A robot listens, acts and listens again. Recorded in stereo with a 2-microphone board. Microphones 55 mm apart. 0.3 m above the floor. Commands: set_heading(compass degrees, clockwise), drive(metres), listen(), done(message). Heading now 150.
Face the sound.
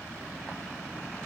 listen()
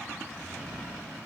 listen()
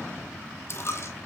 set_heading(100)
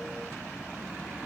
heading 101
listen()
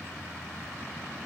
done("I heard a dropped coin, but can't make it out now. It was about straight ahead or 80° left.")